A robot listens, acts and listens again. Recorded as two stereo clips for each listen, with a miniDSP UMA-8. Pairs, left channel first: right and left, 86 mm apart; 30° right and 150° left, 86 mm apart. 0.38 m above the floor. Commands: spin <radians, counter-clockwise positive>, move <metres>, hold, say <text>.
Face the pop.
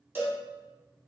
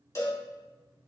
hold
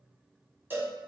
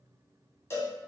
hold
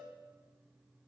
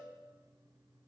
say I can't make out a pop to turn to.